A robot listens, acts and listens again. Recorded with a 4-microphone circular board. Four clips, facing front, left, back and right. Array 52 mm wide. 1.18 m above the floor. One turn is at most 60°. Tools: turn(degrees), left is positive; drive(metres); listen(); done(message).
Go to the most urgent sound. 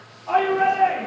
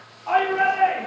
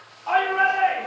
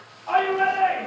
turn(degrees=60)
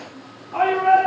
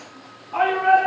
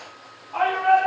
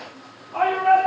turn(degrees=60)
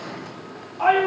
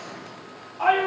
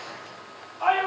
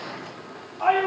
turn(degrees=30)
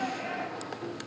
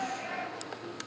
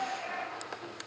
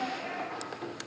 drive(metres=1.0)
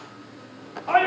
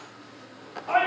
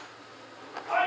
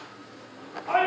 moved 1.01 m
drive(metres=1.0)
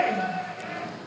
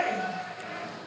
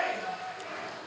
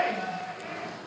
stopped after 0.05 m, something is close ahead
done("I am next to the shout.")